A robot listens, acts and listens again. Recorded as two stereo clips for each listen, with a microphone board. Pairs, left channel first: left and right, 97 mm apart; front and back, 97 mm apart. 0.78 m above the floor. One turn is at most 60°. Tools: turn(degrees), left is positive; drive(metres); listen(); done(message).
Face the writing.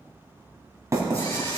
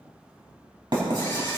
turn(degrees=-60)
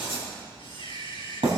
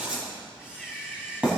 turn(degrees=-60)
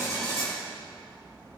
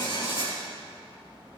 turn(degrees=-40)
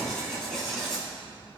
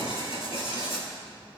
done("Found it: writing, straight ahead.")